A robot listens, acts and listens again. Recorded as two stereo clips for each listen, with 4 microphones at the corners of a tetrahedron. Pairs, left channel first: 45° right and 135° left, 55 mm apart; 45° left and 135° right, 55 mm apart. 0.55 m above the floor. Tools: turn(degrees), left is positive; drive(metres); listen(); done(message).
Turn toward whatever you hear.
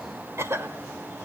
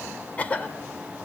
turn(degrees=105)
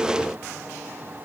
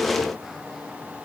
listen()
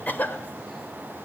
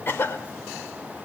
done("Found it: a cough, straight ahead, 2 to 4 m away.")